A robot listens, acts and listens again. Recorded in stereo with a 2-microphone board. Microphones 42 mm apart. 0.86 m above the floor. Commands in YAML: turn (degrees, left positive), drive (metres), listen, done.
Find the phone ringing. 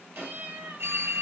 turn: -90
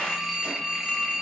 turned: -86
turn: -10
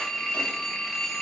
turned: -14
done: "Found it: a phone ringing, straight ahead, 2 to 4 m away."